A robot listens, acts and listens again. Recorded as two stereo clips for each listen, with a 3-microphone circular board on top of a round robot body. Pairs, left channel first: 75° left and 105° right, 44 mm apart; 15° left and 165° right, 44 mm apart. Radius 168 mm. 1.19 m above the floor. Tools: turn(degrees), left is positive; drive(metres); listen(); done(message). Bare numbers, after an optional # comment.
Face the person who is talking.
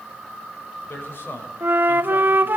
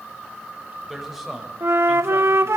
# The man speaking: 110° left.
turn(110)
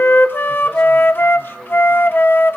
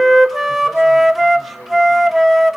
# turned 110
listen()
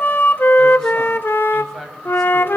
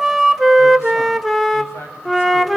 # The man speaking is now 10° right.
turn(-10)
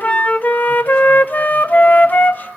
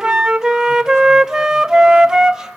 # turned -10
listen()
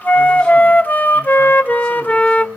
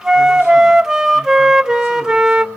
listen()
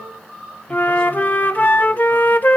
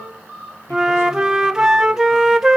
done("Facing where the man speaking came from. I can't hear it now.")